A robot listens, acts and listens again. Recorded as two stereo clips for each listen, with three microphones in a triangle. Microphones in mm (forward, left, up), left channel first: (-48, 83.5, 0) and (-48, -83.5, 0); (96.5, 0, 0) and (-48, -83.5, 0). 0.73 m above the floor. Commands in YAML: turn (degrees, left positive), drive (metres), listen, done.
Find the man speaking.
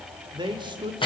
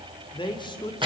turn: -30
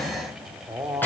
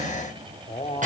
turn: -20
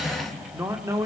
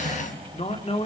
turn: -20
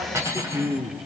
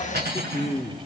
turn: -20
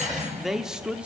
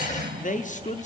turn: -10
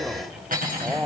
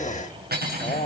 done: "Facing the man speaking, 1 to 2 m away."